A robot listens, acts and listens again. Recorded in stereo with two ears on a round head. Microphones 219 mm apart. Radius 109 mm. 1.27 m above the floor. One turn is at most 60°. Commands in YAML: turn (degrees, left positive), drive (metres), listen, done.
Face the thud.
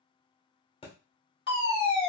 turn: 20
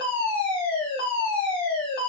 listen: true
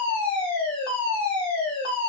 done: "I heard a thud, but can't make it out now. It was about straight ahead or 140° left."